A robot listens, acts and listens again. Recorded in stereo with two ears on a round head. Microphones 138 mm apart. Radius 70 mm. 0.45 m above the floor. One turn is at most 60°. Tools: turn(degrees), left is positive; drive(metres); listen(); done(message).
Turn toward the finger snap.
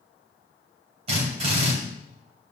listen()
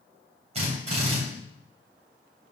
listen()
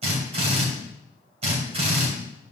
done("I can't make out a finger snap to turn to.")